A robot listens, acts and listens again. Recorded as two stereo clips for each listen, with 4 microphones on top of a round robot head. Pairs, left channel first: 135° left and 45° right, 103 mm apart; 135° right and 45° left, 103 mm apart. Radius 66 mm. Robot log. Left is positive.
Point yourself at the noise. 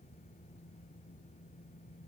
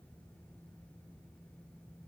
cmd idle
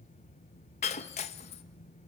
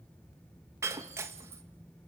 note: The breaking glass: 110° left.
cmd yaw +110
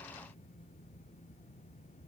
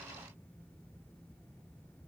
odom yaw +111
end: Facing where the breaking glass came from. I can't hear it now.